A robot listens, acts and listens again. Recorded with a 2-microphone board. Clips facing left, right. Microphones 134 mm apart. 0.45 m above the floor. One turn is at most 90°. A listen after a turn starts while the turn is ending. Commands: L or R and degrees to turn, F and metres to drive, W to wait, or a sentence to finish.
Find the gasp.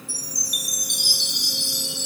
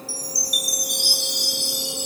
W
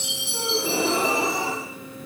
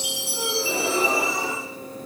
L70
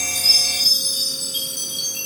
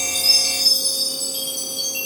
W
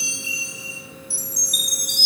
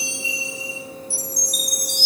I heard a gasp, but can't make it out now. It was about straight ahead or 40° left.